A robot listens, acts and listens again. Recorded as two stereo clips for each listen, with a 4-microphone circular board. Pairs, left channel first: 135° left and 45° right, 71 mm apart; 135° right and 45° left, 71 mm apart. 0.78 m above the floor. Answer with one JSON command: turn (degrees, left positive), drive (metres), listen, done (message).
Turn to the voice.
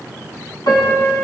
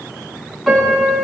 {"listen": true}
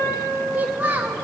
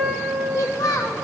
{"turn": -105}
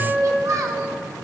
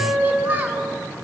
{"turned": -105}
{"turn": -15}
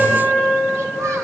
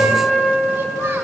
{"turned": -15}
{"listen": true}
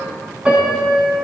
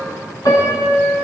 {"listen": true}
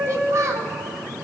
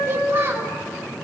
{"done": "Found it: a child speaking, straight ahead."}